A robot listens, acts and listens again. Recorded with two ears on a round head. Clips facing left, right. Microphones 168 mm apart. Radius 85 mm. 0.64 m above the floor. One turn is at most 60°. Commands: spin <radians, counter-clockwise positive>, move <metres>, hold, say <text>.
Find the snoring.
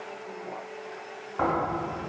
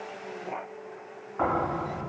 spin 0.87
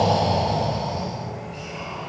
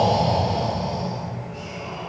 spin 1.05
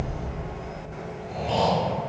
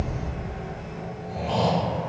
spin 0.44
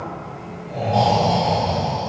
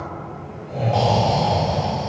say Facing the snoring.